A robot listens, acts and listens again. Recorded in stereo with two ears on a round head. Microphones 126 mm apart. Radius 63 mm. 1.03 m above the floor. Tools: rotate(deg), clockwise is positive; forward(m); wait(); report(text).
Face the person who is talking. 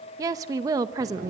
rotate(25)
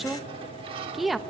report("Found it: a woman speaking, straight ahead.")